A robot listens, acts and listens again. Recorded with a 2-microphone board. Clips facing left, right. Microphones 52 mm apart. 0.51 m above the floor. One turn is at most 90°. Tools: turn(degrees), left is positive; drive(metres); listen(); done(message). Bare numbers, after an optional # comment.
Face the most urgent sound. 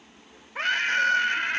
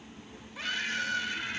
# The scream: about 50° left or 130° left.
turn(50)
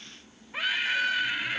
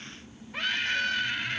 # So it is at 10° left.
turn(10)
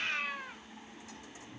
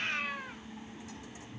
done("Found it: a scream, straight ahead.")